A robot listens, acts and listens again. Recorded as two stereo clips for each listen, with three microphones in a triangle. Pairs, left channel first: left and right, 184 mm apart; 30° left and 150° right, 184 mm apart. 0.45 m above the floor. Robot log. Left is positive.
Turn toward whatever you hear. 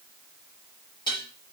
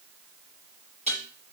note: The dishes clattering: 155° left.
cmd yaw +155
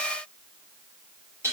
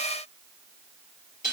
note: The dishes clattering is now 15° right.
cmd yaw -15
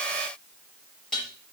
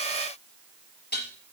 end: Facing the dishes clattering, over 4 m away.